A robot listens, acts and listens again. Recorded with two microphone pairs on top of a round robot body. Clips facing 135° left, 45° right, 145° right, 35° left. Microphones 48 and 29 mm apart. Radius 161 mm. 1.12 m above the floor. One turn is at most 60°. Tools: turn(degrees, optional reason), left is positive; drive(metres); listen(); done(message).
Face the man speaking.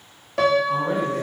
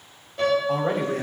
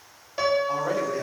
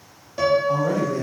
turn(degrees=-60, reason="The man speaking: 75° right.")
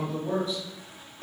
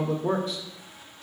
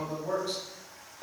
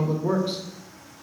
turn(degrees=-30, reason="The man speaking is now 30° right.")
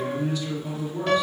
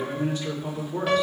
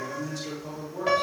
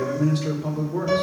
done("Found it: a man speaking, straight ahead, 2 to 4 m away.")